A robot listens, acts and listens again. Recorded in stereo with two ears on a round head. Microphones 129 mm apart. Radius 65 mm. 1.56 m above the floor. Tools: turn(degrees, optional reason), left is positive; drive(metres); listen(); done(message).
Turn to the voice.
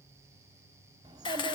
turn(degrees=-30, reason="The child speaking: about 30° right or 150° right.")
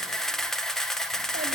listen()
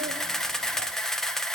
listen()
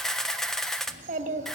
turn(degrees=-120, reason="So it is at 120° right.")
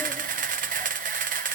listen()
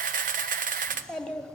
done("Found it: a child speaking, straight ahead, 2 to 4 m away.")